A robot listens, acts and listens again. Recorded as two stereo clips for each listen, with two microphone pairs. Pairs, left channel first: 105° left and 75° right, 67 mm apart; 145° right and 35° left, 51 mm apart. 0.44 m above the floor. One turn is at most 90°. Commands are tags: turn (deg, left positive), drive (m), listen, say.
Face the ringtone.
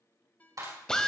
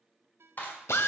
<turn deg="45"/>
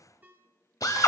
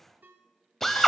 <turn deg="-10"/>
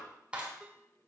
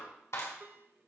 <listen/>
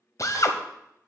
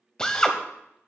<listen/>
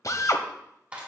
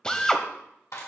<say>Facing where the ringtone came from. I can't hear it now.</say>